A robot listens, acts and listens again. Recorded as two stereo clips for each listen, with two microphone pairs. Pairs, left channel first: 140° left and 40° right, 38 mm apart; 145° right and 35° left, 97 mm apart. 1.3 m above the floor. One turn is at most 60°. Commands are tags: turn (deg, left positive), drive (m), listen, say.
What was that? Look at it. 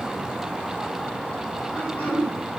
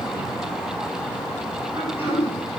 <turn deg="60"/>
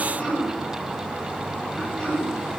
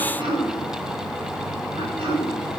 <turn deg="60"/>
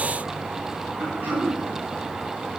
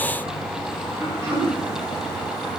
<turn deg="-10"/>
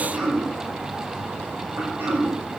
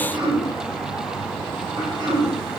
<say>Facing the throat clearing.</say>